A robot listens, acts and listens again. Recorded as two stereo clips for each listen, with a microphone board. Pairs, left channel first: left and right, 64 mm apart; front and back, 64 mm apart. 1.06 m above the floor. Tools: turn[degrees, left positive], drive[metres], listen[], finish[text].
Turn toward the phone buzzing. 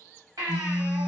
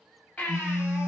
Thought: The phone buzzing: 160° right.
Action: turn[-160]
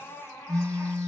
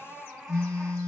Action: finish[Found it: a phone buzzing, straight ahead.]